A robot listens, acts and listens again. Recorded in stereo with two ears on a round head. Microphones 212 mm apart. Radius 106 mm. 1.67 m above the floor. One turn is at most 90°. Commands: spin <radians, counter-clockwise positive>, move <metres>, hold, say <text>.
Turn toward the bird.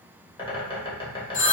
spin 0.35
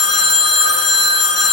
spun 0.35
hold
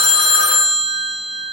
hold
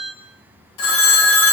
say I heard a bird, but can't make it out now. It was about straight ahead or 140° left.